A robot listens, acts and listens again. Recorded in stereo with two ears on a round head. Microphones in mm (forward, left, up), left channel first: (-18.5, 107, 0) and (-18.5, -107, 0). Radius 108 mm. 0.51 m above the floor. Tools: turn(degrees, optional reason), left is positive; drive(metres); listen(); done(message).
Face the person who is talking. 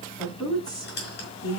turn(degrees=15, reason="The woman speaking: about 15° left or 165° left.")
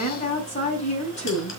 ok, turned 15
turn(degrees=150, reason="So it is at 150° left.")
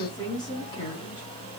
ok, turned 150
turn(degrees=20, reason="The woman speaking is now 20° left.")
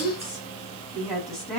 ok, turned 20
done("Found it: a woman speaking, straight ahead.")